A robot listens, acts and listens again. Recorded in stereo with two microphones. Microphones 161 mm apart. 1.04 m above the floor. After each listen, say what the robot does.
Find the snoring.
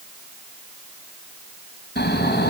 Turn 90° left.
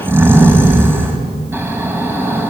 Turn 15° right.
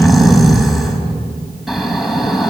Facing the snoring, 2 to 4 m away.